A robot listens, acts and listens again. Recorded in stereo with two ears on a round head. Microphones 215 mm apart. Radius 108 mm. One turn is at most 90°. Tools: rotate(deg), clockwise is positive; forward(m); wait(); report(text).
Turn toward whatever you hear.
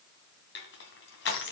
rotate(-50)
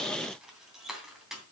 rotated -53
report("Found it: crushing, straight ahead.")